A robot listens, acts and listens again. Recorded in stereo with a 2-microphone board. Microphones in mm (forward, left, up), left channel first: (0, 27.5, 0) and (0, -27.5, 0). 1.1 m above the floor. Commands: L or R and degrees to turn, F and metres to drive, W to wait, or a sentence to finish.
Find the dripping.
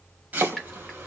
L30
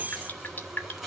L145
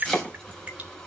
R30
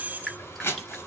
L10
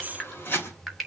Facing the dripping.